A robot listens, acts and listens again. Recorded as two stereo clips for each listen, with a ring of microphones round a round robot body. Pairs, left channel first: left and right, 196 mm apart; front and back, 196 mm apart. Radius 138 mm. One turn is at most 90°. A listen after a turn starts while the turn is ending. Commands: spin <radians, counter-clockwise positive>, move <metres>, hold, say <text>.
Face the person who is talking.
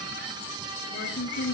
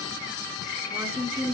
spin 1.57
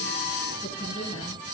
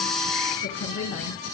spin 0.26
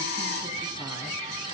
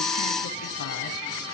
hold
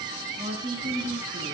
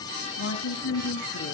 spin -0.61
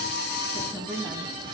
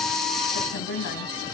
say Facing the woman speaking, 2 to 4 m away.